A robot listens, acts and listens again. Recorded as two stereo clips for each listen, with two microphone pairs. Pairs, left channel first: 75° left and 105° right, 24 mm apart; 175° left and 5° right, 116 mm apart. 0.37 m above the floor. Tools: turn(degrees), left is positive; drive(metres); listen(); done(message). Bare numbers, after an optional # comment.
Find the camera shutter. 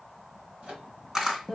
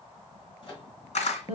# The camera shutter: 170° right.
turn(-170)
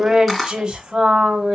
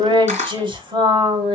done("Facing the camera shutter, 2 to 4 m away.")